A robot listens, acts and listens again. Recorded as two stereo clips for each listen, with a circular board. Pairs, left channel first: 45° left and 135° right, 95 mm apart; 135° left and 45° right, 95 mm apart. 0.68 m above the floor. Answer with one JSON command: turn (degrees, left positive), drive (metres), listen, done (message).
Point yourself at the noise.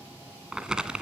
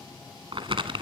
{"turn": -55}
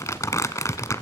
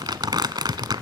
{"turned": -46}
{"turn": -10}
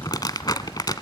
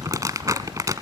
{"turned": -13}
{"done": "Facing the crumpling, 1 to 2 m away."}